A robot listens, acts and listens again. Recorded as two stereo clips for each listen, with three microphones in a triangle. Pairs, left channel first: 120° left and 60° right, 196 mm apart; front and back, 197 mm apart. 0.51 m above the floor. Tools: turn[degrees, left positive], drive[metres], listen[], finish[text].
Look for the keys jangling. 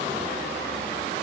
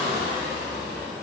Action: listen[]
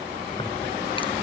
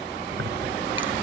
Thought: The keys jangling: 175° right.
Action: turn[-175]
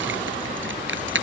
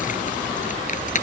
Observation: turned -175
Thought: The keys jangling is now 50° right.
Action: turn[-50]
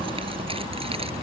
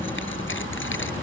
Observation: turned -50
Action: finish[Facing the keys jangling.]